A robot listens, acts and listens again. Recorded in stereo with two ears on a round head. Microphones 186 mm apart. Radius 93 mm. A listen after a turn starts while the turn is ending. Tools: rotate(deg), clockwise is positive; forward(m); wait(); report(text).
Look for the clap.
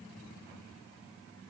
wait()
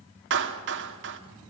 rotate(60)
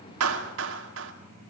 rotate(60)
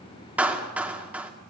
report("Found it: a clap, straight ahead.")